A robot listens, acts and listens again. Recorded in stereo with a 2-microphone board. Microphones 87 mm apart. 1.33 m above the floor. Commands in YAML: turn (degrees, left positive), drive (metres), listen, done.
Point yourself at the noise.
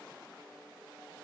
listen: true
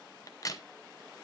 turn: 40
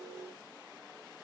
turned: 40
listen: true
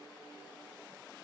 done: "I heard a crack, but can't make it out now. It was about straight ahead or 100° left."